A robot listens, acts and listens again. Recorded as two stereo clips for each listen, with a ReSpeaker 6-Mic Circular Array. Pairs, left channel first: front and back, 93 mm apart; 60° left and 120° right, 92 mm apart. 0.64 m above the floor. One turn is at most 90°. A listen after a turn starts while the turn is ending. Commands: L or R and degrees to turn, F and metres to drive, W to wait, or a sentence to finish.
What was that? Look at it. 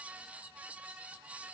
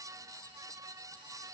W
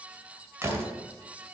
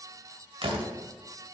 R90
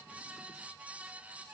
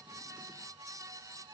R30
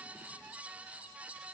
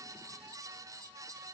I heard a door slam from this way, but can't make it out now.